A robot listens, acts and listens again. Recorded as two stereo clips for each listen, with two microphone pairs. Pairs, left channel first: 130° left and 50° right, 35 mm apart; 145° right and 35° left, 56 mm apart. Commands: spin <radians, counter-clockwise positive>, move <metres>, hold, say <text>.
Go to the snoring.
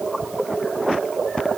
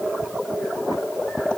hold
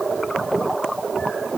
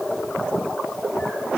hold
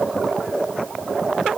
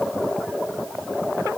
say I can't make out snoring.